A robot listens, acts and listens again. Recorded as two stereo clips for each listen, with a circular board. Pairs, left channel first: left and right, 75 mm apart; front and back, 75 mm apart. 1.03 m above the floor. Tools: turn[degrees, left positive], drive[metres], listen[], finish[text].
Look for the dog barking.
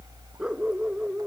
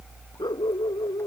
Thought: The dog barking: 10° right.
Action: turn[-10]
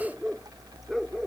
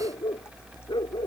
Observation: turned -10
Action: finish[Facing the dog barking.]